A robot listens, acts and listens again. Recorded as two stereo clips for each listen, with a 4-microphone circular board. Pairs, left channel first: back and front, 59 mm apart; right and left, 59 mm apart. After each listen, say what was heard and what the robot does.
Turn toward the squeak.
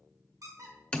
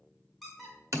Found it: a squeak, straight ahead, 2 to 4 m away.